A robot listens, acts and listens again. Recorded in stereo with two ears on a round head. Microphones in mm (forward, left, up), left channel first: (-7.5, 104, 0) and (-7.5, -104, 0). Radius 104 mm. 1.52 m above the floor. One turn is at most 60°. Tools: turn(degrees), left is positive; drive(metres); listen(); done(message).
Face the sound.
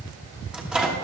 turn(degrees=-30)
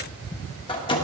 turn(degrees=25)
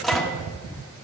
done("Facing the microwave, 1 to 2 m away.")